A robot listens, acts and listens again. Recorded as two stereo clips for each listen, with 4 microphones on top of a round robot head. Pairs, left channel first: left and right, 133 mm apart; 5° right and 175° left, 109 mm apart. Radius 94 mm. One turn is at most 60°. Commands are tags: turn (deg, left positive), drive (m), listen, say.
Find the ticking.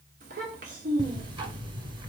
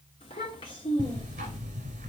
<turn deg="-60"/>
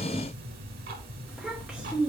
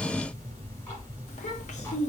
<turn deg="-60"/>
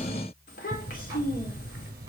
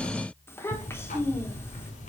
<turn deg="-20"/>
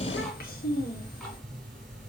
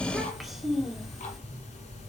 <say>Facing the ticking, 1 to 2 m away.</say>